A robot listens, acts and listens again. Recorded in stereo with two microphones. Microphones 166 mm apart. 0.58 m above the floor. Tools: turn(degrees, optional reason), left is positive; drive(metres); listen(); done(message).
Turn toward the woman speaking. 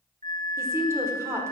turn(degrees=-15, reason="The woman speaking: about 15° right or 165° right.")
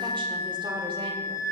listen()
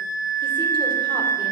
listen()
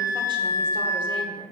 done("I heard a woman speaking, but can't make it out now. It was about straight ahead or 150° right.")